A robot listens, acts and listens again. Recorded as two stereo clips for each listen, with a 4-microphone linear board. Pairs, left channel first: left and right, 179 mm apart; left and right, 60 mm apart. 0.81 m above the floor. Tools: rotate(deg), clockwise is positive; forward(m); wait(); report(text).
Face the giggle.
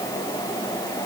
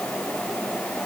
wait()
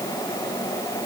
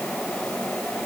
wait()
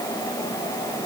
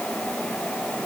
report("I can't make out a giggle to turn to.")